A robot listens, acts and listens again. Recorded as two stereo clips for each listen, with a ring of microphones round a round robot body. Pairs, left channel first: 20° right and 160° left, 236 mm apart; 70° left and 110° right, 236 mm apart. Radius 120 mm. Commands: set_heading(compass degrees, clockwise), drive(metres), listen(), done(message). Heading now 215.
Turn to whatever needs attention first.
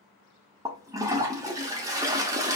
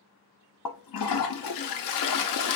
listen()
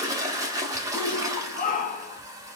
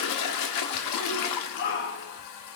set_heading(185)
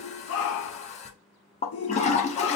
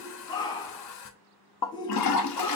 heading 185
done("Found it: a shout, straight ahead, under 1 m away.")